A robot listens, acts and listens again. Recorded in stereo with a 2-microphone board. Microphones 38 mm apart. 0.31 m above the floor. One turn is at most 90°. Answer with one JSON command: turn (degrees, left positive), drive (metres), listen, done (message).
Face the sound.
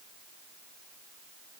{"listen": true}
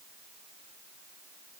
{"listen": true}
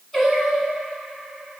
{"turn": 30}
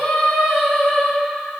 {"turn": 90}
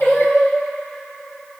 {"turn": 70}
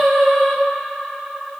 {"done": "Facing the singing."}